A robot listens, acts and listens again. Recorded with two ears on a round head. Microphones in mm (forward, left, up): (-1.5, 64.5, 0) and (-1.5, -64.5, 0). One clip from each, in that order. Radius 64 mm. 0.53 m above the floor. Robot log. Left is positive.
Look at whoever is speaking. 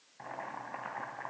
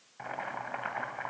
cmd idle
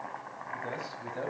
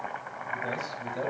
note: The man speaking: about 20° right or 160° right.
cmd yaw -20
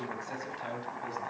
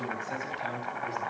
end: Facing the man speaking, over 4 m away.